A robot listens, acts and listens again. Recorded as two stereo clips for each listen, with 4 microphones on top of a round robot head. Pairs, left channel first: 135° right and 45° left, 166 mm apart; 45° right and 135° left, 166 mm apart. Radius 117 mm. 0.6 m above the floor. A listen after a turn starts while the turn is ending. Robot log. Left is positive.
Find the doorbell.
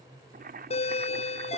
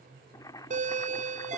note: The doorbell: 175° left.
cmd yaw +175
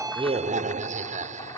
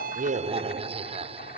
note: The doorbell is now 85° left.
cmd yaw +85
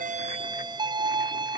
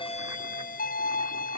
note: The doorbell is now 15° right.
cmd yaw -15
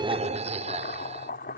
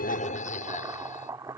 end: Facing the doorbell.